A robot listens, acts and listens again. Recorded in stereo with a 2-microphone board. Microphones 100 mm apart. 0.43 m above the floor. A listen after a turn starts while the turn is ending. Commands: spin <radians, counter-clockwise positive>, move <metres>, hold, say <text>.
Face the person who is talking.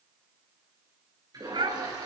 spin -0.96
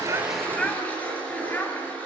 spin 0.35
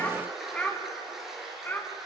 spin 0.35
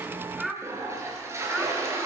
say Facing the child speaking.